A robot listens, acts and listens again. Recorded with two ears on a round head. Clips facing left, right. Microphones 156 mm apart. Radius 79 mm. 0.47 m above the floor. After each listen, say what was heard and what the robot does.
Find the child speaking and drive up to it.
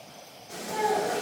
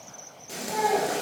Turn 30° left.
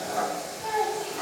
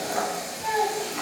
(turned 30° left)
So it is at 15° right. Turn 15° right.
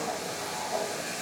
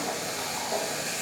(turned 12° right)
Keep listening.
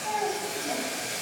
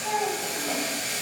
Drive 1.0 m forward.
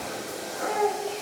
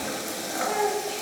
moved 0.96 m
Drive 1.0 m forward.
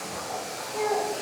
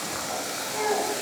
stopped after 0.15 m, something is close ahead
Arrived at the child speaking, straight ahead.